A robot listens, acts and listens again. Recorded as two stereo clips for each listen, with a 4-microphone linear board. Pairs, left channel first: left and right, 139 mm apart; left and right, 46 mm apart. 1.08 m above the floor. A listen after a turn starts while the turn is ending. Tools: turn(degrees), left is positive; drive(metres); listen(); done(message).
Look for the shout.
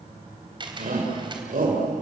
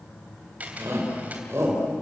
turn(degrees=-75)
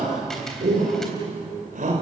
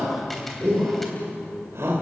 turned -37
turn(degrees=-70)
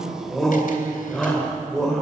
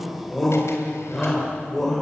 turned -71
done("Found it: a shout, straight ahead.")